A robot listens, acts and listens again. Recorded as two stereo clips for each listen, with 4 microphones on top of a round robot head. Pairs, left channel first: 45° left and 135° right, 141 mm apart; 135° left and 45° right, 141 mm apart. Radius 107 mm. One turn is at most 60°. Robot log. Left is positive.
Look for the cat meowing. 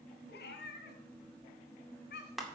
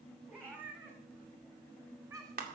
note: The cat meowing: 20° left.
cmd yaw +20
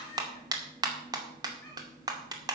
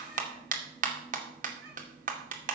cmd idle
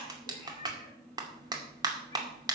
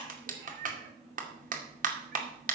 note: The cat meowing is now 20° right.
cmd yaw -20
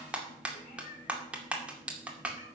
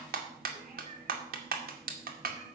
cmd idle
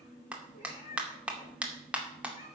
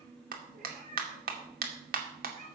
end: Found it: a cat meowing, straight ahead, 2 to 4 m away.